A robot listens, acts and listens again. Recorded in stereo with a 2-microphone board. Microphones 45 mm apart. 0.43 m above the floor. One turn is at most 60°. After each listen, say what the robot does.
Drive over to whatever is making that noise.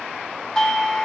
Turn 30° left.
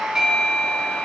Turn 15° right.
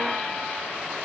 Keep listening.
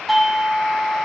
Drive 1.0 m forward.
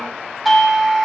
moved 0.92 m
Drive 1.0 m forward.
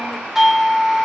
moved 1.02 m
Turn 10° right.
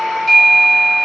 Drive 1.0 m forward.
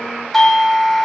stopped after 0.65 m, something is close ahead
Arrived at the doorbell, straight ahead.